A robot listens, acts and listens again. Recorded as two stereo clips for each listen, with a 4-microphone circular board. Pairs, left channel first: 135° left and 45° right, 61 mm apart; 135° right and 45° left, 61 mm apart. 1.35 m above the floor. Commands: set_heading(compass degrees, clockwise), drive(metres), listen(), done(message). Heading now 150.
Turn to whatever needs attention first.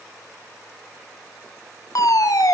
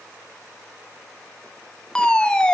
set_heading(0)
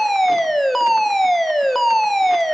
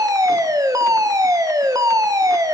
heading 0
set_heading(315)
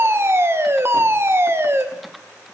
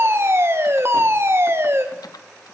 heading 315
done("Found it: a fire alarm, straight ahead.")